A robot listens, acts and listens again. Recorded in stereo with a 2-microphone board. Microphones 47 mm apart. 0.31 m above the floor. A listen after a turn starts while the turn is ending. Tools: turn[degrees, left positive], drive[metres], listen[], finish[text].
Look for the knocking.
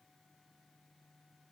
Action: listen[]
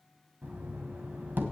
Thought: The knocking: about 40° right or 140° right.
Action: turn[-40]
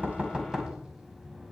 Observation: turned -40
Thought: So it is at 15° right.
Action: turn[-15]
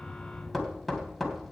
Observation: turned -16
Action: finish[Facing the knocking, 1 to 2 m away.]